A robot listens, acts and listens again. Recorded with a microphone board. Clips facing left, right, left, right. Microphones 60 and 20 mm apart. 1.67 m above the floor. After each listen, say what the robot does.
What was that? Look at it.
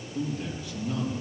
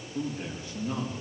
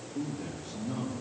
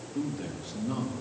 Turn 35° right.
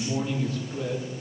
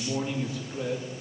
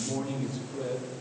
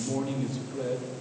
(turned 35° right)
Turn 15° right.
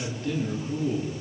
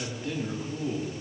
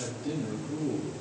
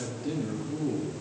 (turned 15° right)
Turn 10° right.
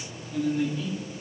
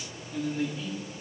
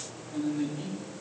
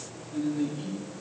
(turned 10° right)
Found it: a man speaking, straight ahead, 2 to 4 m away.